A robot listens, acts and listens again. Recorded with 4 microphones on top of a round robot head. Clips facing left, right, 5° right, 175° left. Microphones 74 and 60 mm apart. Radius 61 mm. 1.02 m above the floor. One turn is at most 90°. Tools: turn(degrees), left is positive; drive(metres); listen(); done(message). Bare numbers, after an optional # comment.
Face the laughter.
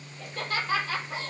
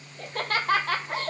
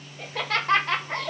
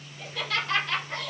# The laughter: 55° right.
turn(-55)
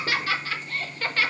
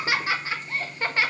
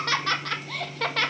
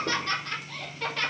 # The laughter is now 15° right.
turn(-15)
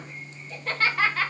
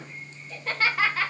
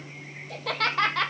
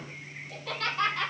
done("Facing the laughter.")